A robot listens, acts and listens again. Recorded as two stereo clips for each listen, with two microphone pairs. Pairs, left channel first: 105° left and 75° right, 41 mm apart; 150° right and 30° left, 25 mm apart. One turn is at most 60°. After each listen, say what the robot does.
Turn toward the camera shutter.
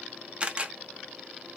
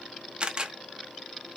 Turn 15° right.
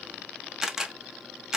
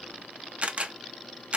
Facing the camera shutter.